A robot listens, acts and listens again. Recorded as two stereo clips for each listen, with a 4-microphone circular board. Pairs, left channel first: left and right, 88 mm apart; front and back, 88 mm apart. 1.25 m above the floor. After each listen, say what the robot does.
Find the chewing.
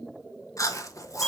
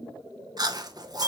Turn 140° left.
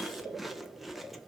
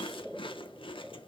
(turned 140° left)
Found it: chewing, straight ahead.